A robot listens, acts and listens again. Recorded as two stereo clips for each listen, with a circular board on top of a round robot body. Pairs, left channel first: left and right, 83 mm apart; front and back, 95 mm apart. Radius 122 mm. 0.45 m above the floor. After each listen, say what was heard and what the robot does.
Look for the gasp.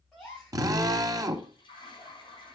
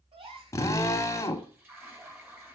The gasp: 170° left. Turn 170° left.
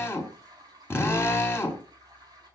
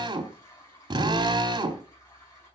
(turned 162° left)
Nothing new. It was at 10° left. Turn 10° left.
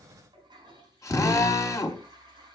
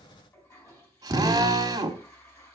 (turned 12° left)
I heard a gasp from this way, but can't make it out now.